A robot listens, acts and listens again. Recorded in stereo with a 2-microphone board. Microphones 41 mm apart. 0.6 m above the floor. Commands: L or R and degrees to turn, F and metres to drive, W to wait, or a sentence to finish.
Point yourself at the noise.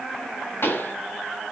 L65
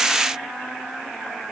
W
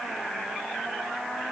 I heard a pop, but can't make it out now. It was about straight ahead or 50° left.